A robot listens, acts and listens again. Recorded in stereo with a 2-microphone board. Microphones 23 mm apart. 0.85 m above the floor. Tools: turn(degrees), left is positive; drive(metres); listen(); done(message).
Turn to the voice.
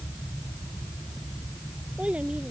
turn(degrees=-70)
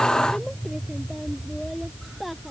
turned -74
done("Found it: a child speaking, straight ahead.")